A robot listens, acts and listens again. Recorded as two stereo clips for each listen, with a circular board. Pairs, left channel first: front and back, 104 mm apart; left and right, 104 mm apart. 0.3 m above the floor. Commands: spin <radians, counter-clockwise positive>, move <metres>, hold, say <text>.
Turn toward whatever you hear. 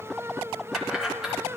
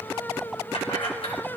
spin 1.66
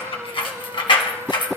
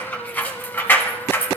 spin 0.44
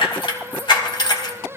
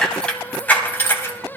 spin 0.61
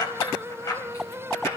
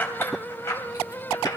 spin 0.70
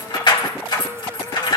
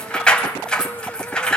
spin 0.17
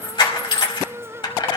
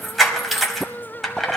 say Facing the keys jangling, 1 to 2 m away.